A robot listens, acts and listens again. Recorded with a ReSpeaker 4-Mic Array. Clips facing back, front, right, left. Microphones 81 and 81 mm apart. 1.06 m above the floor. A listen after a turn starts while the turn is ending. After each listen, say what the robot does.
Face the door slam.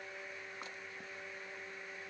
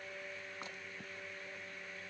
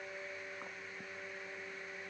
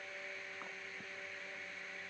Keep listening.
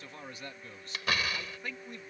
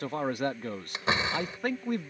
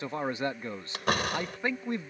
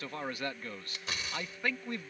Turn 65° right.
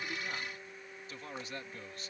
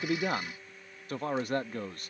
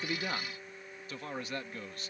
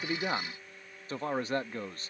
I heard a door slam from this way, but can't make it out now.